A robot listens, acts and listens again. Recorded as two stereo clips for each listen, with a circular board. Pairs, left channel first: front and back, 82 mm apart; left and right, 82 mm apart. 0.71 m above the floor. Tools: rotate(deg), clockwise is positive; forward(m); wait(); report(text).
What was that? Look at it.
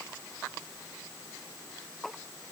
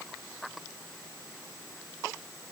wait()
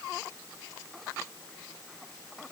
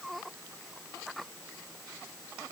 wait()
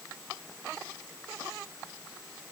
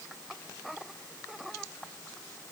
report("I can't make out anything to turn to.")